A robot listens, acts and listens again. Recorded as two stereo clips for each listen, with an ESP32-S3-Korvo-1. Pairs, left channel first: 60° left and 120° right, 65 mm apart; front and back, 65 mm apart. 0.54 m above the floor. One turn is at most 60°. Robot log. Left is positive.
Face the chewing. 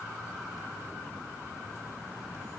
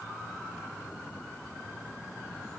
cmd idle
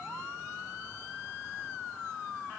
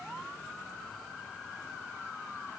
cmd idle
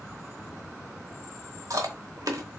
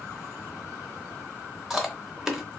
note: The chewing: 95° right.
cmd yaw -60
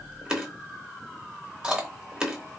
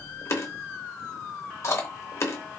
note: The chewing is now 45° right.
cmd yaw -45
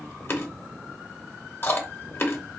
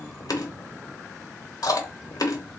note: The chewing is now 10° left.
cmd yaw +10
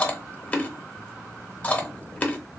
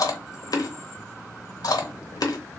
end: Facing the chewing, under 1 m away.